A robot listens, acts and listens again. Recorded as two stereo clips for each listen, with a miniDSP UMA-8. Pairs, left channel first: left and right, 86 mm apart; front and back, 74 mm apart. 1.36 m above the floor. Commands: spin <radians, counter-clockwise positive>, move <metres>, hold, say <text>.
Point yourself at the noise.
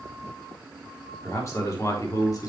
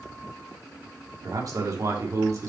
spin 2.36
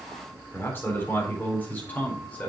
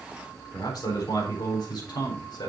spin 0.35
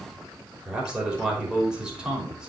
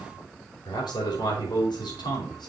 spin -0.17
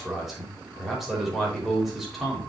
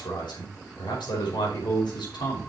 say Found it: a man speaking, straight ahead, over 4 m away.